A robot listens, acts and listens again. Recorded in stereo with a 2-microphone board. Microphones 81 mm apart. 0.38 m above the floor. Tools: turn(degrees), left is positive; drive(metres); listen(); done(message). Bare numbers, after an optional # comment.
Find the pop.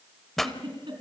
turn(30)
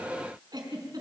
listen()
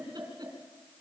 done("I heard a pop, but can't make it out now. It was about 25° right or 145° left.")